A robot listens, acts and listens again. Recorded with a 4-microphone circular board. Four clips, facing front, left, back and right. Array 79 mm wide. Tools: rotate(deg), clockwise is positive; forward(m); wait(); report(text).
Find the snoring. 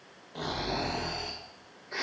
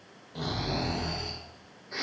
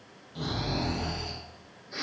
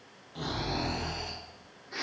rotate(-25)
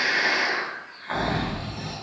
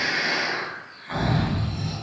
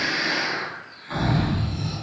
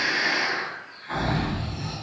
report("Found it: snoring, straight ahead.")